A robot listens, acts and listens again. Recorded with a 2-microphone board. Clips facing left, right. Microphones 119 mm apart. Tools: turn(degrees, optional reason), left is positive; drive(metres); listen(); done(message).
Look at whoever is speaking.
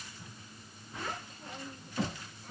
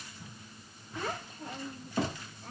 turn(degrees=-60, reason="The child speaking: about 60° right or 120° right.")
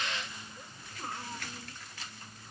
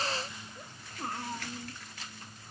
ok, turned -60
turn(degrees=-60, reason="So it is at 60° right.")
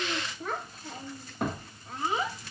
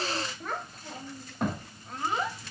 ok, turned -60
done("Found it: a child speaking, straight ahead, 1 to 2 m away.")